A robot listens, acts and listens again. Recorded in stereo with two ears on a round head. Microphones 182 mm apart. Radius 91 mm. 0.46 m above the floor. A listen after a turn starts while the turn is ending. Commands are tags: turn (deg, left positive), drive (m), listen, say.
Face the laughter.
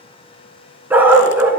<listen/>
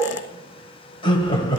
<turn deg="25"/>
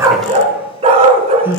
<turn deg="-15"/>
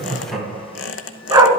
<say>Found it: laughter, straight ahead.</say>